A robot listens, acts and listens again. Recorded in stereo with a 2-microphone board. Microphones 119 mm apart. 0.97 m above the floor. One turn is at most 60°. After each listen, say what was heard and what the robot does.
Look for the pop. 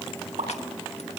The pop: about 75° right or 105° right. Turn 60° right.
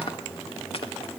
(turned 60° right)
Keep listening.
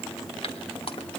I heard a pop, but can't make it out now. It was about 15° right or 45° right.